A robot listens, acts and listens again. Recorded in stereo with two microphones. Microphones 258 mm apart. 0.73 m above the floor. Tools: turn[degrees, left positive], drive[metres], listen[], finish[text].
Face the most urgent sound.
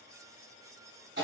Action: listen[]
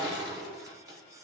Action: listen[]
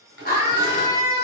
Thought: The scream: about 35° left or 145° left.
Action: turn[35]
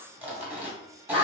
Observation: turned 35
Thought: So it is at 105° left.
Action: turn[105]
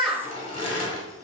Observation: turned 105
Action: finish[Found it: a scream, straight ahead.]